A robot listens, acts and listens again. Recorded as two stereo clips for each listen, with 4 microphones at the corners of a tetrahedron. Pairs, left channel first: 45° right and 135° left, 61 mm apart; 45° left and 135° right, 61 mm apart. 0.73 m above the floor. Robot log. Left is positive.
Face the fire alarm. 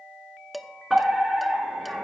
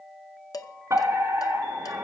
note: The fire alarm: 135° right.
cmd yaw -135
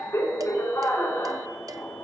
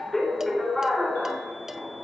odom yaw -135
note: The fire alarm is now 40° right.
cmd yaw -40
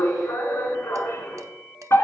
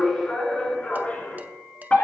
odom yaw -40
note: The fire alarm is now 20° right.
cmd yaw -20
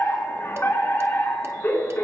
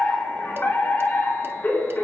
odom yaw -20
end: Found it: a fire alarm, straight ahead.